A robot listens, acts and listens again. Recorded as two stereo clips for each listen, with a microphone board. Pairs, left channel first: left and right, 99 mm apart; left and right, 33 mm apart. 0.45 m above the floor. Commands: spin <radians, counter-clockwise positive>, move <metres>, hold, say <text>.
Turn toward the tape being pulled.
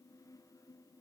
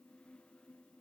hold
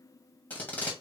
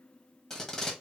spin 0.26
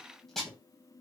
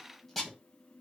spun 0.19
say Facing the tape being pulled, 2 to 4 m away.